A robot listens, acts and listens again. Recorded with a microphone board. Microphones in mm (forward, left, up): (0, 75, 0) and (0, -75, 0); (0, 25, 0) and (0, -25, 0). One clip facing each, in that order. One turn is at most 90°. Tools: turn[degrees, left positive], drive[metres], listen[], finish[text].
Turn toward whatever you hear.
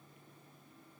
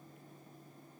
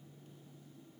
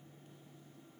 Action: listen[]
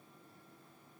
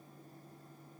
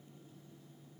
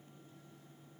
Action: listen[]
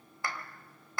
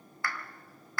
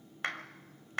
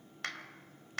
Thought: The clap: about 20° left or 160° left.
Action: turn[20]
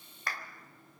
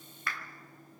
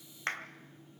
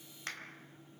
Thought: So it is at 135° left.
Action: turn[90]
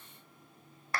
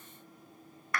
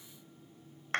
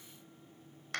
Thought: The clap is now 40° left.
Action: turn[40]
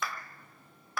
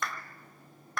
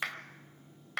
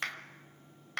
Action: finish[Found it: a clap, straight ahead.]